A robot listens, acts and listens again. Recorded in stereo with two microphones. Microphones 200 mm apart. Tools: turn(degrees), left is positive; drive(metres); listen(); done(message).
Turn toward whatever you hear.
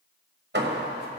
turn(degrees=-60)
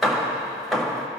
done("Found it: hammering, straight ahead, 1 to 2 m away.")